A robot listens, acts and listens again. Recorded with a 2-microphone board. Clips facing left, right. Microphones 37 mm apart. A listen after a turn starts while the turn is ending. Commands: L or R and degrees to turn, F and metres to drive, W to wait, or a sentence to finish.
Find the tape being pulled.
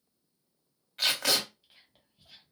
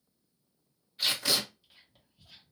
L90
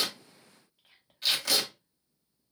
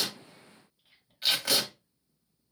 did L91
R15
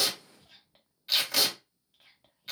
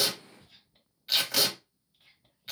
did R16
Found it: tape being pulled, straight ahead.